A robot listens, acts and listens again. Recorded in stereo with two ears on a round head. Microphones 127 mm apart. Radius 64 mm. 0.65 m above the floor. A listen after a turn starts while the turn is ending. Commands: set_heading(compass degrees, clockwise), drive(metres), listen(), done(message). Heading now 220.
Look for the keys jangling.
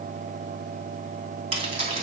set_heading(270)
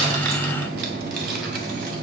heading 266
listen()
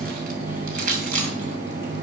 set_heading(321)
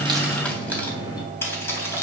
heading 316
set_heading(301)
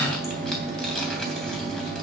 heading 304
listen()
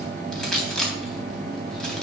done("Found it: keys jangling, straight ahead, 2 to 4 m away.")